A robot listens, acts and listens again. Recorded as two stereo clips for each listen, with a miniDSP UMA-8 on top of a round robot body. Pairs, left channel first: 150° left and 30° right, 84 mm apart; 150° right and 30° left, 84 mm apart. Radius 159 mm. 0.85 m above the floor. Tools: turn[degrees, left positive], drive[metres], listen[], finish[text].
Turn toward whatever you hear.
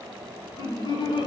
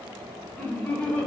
Thought: The laughter: 135° left.
Action: turn[135]
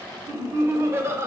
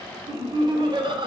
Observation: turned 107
Thought: The laughter is now 25° left.
Action: turn[25]
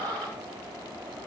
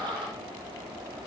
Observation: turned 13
Thought: The laughter is now 15° left.
Action: turn[15]
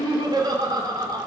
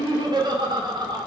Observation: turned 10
Action: finish[Found it: laughter, straight ahead.]